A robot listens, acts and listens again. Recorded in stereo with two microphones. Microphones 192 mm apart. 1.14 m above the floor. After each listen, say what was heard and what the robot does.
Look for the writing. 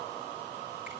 Keep listening.
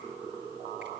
Keep listening.
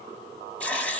Turn 30° left.
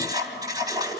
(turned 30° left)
So it is at 20° right. Turn 20° right.
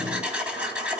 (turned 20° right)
Found it: writing, straight ahead, 2 to 4 m away.